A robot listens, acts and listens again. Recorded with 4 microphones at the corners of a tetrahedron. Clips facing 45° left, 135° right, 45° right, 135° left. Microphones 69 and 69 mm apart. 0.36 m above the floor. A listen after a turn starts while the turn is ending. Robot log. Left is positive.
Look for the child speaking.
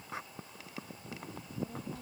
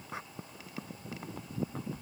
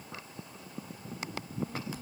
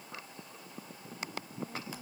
note: The child speaking: 60° left.
cmd yaw +60
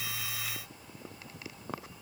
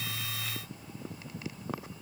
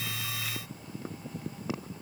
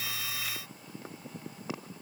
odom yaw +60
cmd idle
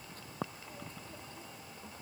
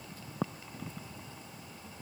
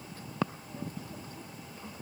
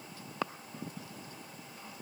cmd idle
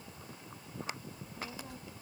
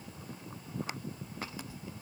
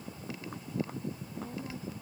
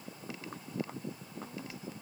note: The child speaking is now 10° left.
cmd yaw +10
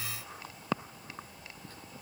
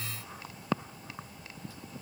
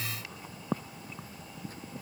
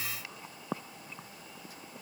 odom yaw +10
end: Found it: a child speaking, straight ahead.